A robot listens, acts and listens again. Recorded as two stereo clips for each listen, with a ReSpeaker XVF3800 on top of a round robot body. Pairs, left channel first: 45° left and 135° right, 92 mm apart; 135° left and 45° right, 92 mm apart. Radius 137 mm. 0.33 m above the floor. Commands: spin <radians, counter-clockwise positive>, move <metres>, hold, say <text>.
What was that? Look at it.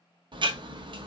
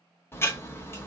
spin -2.79
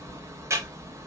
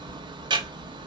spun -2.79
spin -1.40
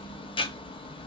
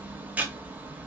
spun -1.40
spin 0.44
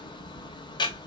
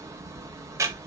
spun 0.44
spin 0.17
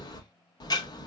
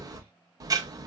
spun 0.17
say Found it: ticking, straight ahead, under 1 m away.